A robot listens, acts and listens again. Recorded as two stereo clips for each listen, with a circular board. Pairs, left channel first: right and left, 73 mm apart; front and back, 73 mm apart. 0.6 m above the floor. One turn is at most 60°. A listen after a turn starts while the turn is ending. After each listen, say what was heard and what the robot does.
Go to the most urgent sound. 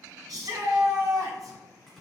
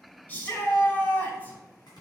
The shout: 60° left. Turn 60° left.
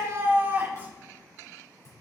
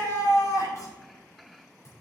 The shout is now 20° left. Turn 20° left.
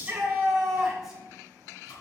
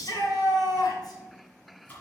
Drive 1.0 m forward.
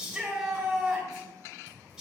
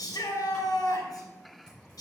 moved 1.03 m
Drive 1.0 m forward.
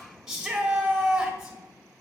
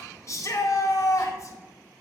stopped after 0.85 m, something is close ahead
The shout is now 10° left. Turn 10° left.
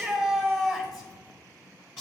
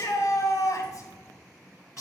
Arrived at the shout, straight ahead.